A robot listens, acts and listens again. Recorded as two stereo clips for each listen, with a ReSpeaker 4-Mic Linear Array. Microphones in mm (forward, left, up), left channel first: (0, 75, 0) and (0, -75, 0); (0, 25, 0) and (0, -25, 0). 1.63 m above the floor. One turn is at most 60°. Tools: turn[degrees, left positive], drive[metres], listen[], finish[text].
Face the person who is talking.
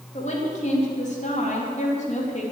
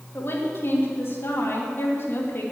Thought: The woman speaking: about 50° left or 130° left.
Action: turn[50]
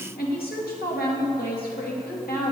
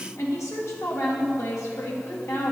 Thought: So it is at 80° left.
Action: turn[60]
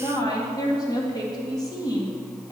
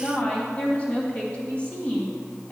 Thought: The woman speaking is now 25° left.
Action: turn[25]
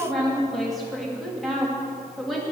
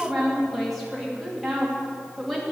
Action: finish[Found it: a woman speaking, straight ahead.]